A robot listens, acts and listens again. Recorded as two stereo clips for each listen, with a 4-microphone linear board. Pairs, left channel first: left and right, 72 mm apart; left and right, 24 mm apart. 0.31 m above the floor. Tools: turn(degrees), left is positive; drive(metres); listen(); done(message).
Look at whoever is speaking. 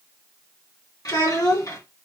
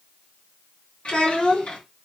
turn(degrees=65)
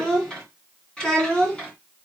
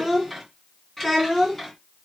turn(degrees=10)
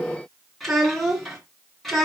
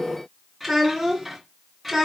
done("Found it: a child speaking, straight ahead, 2 to 4 m away.")